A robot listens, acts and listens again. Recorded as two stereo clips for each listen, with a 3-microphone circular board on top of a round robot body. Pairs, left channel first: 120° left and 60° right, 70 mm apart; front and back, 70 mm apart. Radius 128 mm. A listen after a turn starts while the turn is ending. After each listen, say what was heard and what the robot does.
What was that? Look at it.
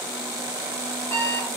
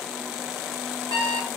The alarm clock: 175° left. Turn 175° left.
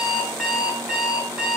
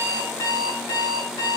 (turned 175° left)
The alarm clock is now 20° left. Turn 20° left.
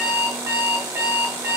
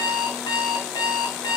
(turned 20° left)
Facing the alarm clock, 2 to 4 m away.